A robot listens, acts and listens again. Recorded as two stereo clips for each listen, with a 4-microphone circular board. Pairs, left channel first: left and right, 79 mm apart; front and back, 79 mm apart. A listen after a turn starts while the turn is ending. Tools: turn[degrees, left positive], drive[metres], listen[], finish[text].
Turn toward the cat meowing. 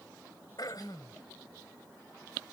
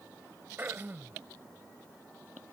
Action: listen[]
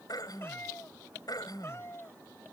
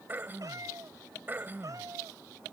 Thought: The cat meowing: 140° left.
Action: turn[140]
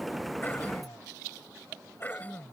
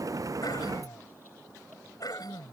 Action: listen[]
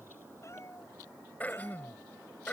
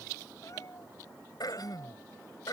Thought: The cat meowing is now 40° left.
Action: turn[40]
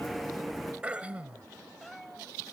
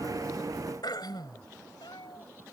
Action: finish[Facing the cat meowing.]